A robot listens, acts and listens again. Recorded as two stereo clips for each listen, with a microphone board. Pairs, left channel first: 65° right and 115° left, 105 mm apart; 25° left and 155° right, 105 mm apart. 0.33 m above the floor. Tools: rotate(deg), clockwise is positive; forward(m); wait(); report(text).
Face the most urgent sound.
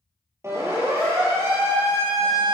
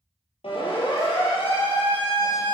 rotate(-50)
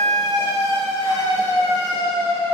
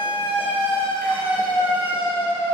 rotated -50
rotate(10)
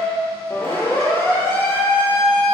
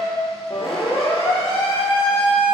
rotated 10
report("Found it: a siren, straight ahead, over 4 m away.")